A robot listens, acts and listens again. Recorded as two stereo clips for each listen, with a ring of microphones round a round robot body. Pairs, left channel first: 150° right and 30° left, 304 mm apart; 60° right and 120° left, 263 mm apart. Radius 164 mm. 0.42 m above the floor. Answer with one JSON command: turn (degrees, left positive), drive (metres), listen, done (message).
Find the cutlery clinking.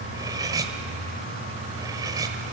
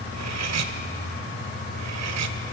{"turn": 110}
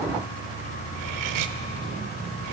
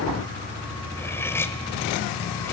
{"turn": 20}
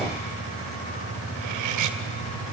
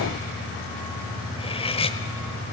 {"turn": 10}
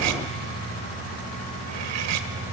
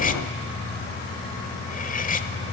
{"done": "Found it: cutlery clinking, straight ahead."}